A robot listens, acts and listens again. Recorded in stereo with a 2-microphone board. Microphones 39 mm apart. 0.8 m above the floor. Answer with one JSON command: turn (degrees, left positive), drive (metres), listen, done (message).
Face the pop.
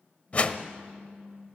{"turn": 60}
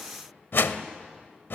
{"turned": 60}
{"listen": true}
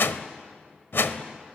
{"done": "I heard a pop, but can't make it out now. It was about straight ahead or 60° left."}